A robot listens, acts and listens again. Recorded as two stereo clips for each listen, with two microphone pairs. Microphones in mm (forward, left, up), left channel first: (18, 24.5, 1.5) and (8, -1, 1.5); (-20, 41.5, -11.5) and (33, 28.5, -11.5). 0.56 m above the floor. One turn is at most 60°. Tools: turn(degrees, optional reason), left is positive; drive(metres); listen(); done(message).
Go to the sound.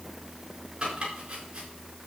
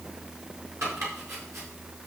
turn(degrees=-45, reason="The chopping: 45° right.")
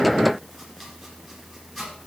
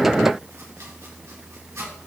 turn(degrees=-10, reason="The chopping is now 10° right.")
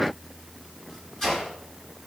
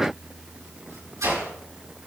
drive(metres=1.0)
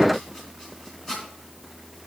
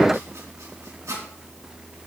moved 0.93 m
drive(metres=1.0)
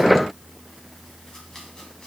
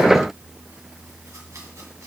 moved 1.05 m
listen()
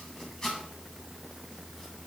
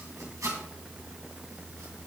drive(metres=1.0)
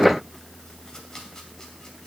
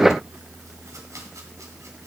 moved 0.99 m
listen()
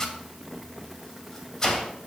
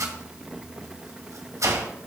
drive(metres=1.0)
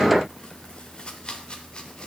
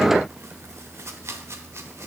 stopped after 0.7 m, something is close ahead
turn(degrees=15, reason="The chopping is now 15° left.")
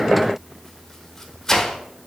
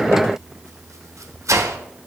done("I am next to the chopping.")